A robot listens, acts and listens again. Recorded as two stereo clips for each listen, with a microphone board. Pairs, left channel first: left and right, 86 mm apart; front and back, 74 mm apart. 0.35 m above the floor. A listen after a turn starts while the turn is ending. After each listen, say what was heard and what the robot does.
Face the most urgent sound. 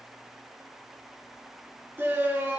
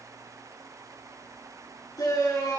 The shout: 25° right. Turn 25° right.
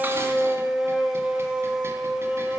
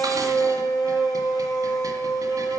The shout is now 10° right. Turn 10° right.
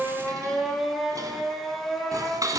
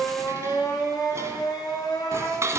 Found it: a shout, straight ahead, over 4 m away.